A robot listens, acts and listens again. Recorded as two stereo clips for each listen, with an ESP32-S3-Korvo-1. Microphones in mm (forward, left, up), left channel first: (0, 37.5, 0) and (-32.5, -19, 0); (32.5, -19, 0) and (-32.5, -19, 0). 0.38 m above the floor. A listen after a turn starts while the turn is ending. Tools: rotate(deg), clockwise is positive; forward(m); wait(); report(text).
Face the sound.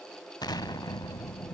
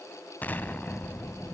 rotate(-65)
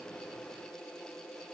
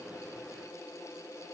report("Facing where the explosion came from. I can't hear it now.")